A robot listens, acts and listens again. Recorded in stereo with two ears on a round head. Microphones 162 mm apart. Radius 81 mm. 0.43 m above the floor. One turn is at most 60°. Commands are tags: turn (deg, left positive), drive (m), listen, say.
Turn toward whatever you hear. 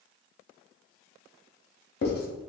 <turn deg="60"/>
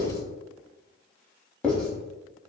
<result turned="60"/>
<say>Facing the writing.</say>